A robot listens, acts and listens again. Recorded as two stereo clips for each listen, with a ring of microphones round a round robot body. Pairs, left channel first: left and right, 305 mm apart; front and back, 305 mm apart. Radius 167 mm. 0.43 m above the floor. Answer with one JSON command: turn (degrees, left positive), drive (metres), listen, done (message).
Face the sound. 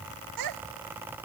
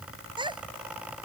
{"turn": -105}
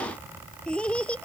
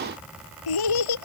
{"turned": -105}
{"done": "Found it: a child speaking, straight ahead."}